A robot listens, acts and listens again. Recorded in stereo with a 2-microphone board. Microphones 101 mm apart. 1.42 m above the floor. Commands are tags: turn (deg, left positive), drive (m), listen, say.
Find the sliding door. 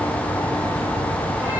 <listen/>
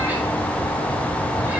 <listen/>
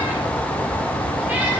<say>I can't make out a sliding door to turn to.</say>